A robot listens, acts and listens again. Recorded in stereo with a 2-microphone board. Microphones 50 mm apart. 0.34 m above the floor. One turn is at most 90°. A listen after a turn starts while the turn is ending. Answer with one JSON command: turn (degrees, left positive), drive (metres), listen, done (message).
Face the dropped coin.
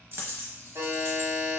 {"turn": -50}
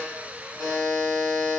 {"listen": true}
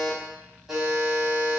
{"done": "I heard a dropped coin, but can't make it out now. It was about straight ahead or 80° right."}